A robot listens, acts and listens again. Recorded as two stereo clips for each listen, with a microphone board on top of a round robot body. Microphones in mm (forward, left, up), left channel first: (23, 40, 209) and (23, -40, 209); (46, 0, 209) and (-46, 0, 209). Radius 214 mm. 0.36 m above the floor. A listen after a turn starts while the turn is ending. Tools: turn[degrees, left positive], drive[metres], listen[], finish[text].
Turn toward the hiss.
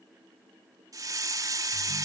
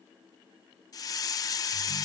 Thought: The hiss: 45° right.
Action: turn[-45]
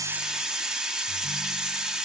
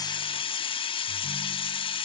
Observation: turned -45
Thought: The hiss is now 10° right.
Action: turn[-10]
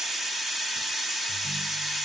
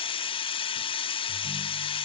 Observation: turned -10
Action: finish[Found it: a hiss, straight ahead, 1 to 2 m away.]